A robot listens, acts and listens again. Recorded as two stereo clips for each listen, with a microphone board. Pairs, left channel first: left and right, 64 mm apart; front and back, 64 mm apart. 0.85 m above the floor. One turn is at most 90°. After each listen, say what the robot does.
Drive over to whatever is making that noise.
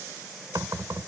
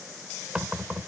Turn 90° right.
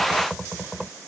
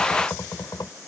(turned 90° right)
Turn 10° right.
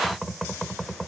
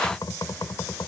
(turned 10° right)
Drive 1.0 m forward.
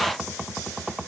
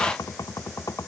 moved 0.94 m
Turn 10° right.
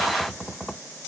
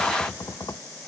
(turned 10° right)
Drive 1.0 m forward.
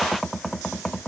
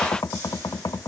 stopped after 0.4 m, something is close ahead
I am next to the knocking.